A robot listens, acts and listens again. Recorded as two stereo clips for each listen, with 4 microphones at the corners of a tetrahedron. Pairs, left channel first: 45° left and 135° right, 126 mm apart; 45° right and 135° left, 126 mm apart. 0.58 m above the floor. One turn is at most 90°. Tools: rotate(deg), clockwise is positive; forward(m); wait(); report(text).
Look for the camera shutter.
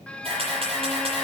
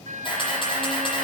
rotate(90)
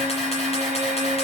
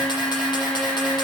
wait()
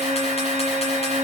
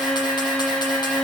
wait()
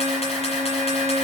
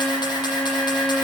report("Facing where the camera shutter came from. I can't hear it now.")